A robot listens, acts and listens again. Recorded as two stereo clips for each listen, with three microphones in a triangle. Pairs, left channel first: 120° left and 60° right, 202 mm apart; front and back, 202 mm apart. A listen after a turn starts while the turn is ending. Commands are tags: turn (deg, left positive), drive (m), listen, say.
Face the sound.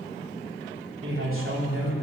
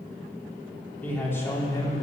<turn deg="-75"/>
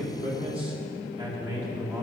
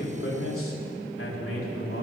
<turn deg="15"/>
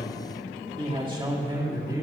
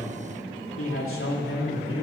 <turn deg="10"/>
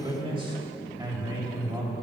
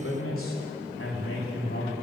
<turn deg="10"/>
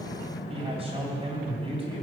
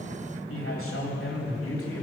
<say>Facing the man speaking, 2 to 4 m away.</say>